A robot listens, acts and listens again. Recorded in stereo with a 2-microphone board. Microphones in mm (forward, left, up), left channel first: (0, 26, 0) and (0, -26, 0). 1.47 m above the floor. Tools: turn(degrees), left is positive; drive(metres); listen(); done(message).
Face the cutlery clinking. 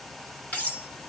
turn(degrees=30)
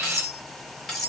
done("Found it: cutlery clinking, straight ahead.")